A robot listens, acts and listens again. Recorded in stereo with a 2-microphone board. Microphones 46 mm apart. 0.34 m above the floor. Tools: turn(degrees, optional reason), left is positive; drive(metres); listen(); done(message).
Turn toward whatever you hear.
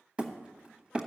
turn(degrees=-25, reason="The hammering: about 25° right or 155° right.")
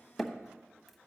done("Facing the hammering, 1 to 2 m away.")